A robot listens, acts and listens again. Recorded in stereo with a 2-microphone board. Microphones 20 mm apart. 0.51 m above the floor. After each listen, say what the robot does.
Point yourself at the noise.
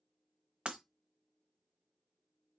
Turn 70° right.
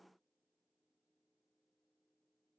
Keep listening.
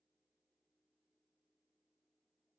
I heard breaking glass, but can't make it out now. It was about straight ahead or 40° right.